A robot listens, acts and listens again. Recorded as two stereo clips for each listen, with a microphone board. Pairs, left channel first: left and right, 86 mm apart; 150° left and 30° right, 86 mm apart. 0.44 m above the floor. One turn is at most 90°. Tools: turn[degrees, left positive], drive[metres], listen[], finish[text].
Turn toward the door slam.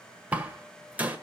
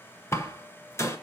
Thought: The door slam: 160° right.
Action: turn[-90]
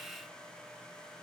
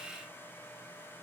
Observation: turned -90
Thought: Nothing new. It was at 70° right.
Action: turn[-70]
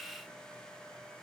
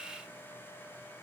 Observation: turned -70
Action: finish[Facing where the door slam came from. I can't hear it now.]